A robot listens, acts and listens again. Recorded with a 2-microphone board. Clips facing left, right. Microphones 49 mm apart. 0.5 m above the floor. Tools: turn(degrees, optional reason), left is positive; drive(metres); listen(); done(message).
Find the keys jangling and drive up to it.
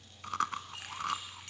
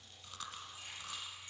turn(degrees=75, reason="The keys jangling: about 75° left or 105° left.")
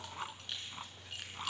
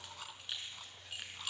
drive(metres=1.0)
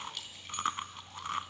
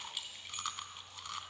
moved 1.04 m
drive(metres=1.0)
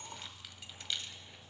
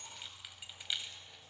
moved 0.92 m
turn(degrees=-10, reason="The keys jangling is now 10° right.")
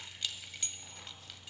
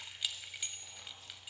turn(degrees=-10, reason="The keys jangling is now 10° right.")
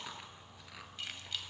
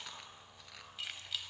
drive(metres=1.0)
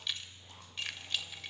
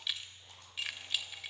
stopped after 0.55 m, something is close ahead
done("I am next to the keys jangling.")